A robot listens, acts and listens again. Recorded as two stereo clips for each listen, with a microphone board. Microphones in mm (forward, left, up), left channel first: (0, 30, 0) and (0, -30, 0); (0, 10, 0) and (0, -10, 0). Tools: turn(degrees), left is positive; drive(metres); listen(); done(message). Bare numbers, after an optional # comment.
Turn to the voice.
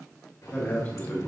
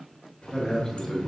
# The man speaking: about 25° left or 155° left.
turn(25)
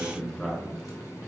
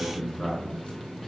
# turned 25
done("Facing the man speaking, 2 to 4 m away.")